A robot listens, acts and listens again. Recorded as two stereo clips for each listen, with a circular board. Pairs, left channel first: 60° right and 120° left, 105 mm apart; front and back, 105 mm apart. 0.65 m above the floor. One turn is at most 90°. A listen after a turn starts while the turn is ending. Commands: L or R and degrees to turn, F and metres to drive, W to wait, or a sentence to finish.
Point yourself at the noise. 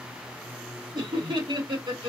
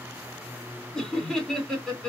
L85
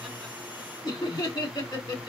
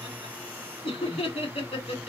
R15
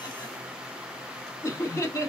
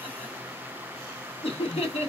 Found it: laughter, straight ahead, 1 to 2 m away.